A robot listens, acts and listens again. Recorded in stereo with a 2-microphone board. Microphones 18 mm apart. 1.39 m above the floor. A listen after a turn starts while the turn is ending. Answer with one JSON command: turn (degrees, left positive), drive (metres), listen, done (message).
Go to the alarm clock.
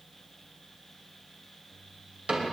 {"listen": true}
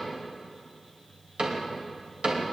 {"listen": true}
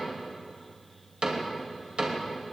{"done": "I can't make out an alarm clock, only a cupboard door."}